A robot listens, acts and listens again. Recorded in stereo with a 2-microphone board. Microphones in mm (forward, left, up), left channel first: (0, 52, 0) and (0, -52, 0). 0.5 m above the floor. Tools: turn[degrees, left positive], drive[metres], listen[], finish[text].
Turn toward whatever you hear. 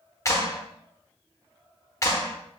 Thought: The clap: about 30° left or 150° left.
Action: turn[30]
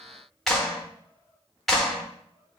Action: finish[Facing the clap, under 1 m away.]